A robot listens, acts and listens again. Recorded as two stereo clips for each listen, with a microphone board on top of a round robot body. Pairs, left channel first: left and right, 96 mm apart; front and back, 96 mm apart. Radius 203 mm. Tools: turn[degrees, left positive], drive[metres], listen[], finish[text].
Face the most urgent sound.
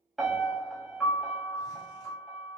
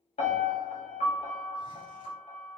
Action: listen[]
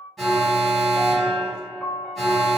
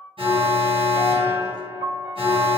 Thought: The alarm: straight behind.
Action: turn[180]
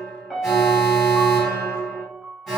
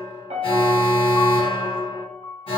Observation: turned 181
Action: finish[Facing the alarm, 1 to 2 m away.]